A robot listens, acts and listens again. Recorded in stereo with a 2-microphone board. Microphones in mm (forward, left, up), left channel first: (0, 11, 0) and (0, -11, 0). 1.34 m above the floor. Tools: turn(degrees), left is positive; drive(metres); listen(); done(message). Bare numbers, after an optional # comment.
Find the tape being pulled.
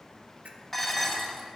listen()
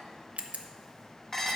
listen()
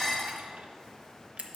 done("I can't make out tape being pulled, only a camera shutter and dishes clattering.")